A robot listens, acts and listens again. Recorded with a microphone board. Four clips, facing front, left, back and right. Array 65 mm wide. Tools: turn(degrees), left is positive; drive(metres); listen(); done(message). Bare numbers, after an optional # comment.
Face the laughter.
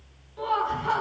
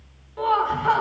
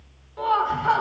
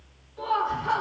# The laughter: 125° left.
turn(125)
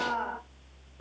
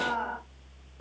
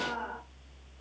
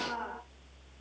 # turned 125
# The laughter is now 40° left.
turn(40)
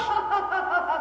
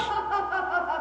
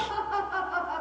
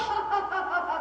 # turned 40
done("Facing the laughter, 1 to 2 m away.")